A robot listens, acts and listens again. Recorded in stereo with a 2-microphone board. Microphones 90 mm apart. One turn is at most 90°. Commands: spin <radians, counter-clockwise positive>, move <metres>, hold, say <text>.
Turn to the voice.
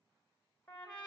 hold
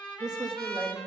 spin -0.96
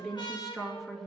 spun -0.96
say Found it: a woman speaking, straight ahead, 2 to 4 m away.